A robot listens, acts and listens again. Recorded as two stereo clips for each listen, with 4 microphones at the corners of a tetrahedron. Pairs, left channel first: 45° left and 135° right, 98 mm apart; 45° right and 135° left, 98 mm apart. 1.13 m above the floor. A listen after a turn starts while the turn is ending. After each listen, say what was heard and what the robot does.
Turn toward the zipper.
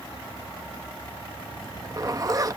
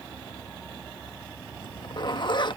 The zipper: 85° right. Turn 85° right.
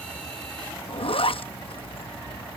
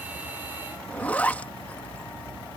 The zipper is now 30° left. Turn 30° left.
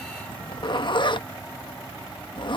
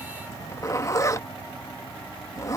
The zipper is now 10° left. Turn 10° left.
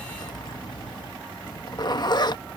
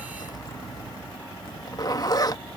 Found it: a zipper, straight ahead.